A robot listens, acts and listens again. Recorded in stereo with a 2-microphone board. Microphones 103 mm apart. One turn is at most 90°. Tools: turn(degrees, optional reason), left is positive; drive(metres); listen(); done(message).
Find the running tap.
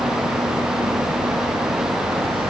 listen()
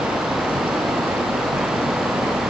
listen()
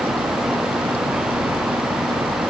done("I can't make out a running tap.")